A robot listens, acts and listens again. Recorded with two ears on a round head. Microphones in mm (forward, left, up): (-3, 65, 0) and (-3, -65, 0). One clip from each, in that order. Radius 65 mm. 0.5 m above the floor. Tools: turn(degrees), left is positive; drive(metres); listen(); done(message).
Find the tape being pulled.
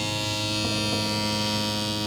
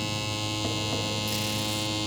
listen()
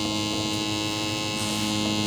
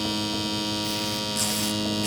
listen()
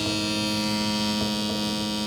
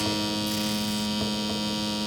done("I can't make out tape being pulled to turn to.")